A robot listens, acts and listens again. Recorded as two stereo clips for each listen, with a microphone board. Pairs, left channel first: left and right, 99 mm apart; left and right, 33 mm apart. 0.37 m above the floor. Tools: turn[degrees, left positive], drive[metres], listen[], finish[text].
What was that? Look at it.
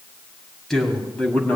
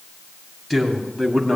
Action: turn[30]
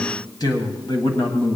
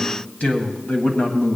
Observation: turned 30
Thought: So it is at 125° left.
Action: turn[125]
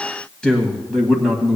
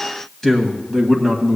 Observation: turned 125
Action: finish[Found it: a man speaking, straight ahead.]